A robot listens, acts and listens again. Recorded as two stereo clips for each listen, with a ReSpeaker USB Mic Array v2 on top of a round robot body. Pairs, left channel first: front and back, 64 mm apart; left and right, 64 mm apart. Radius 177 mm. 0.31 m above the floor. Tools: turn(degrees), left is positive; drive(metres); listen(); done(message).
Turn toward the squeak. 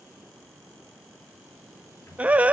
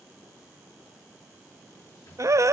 listen()
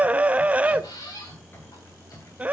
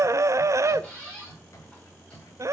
turn(degrees=15)
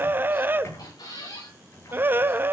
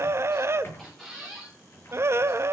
done("Found it: a squeak, straight ahead, over 4 m away.")